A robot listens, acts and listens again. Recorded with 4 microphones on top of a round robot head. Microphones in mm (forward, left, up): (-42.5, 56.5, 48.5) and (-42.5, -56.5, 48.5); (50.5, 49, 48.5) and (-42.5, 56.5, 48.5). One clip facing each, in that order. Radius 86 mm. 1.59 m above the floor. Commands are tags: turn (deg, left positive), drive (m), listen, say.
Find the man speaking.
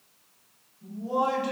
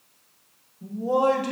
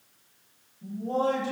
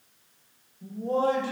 <turn deg="-130"/>
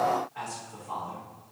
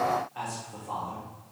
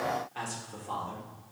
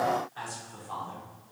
<turn deg="-15"/>
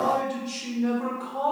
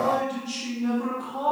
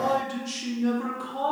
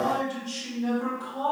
<turn deg="-10"/>
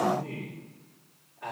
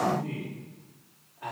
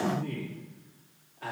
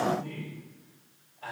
<say>Found it: a man speaking, straight ahead, 2 to 4 m away.</say>